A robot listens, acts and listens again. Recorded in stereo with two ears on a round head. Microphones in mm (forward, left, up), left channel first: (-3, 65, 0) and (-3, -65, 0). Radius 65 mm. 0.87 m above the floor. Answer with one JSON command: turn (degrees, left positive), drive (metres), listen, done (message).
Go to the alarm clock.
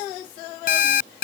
{"turn": 70}
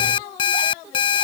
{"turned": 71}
{"turn": 35}
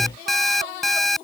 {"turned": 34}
{"drive": 1.0}
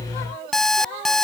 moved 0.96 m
{"drive": 1.0}
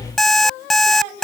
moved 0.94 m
{"drive": 1.0}
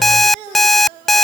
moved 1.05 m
{"drive": 1.0}
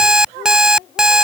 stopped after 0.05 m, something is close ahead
{"done": "I am next to the alarm clock."}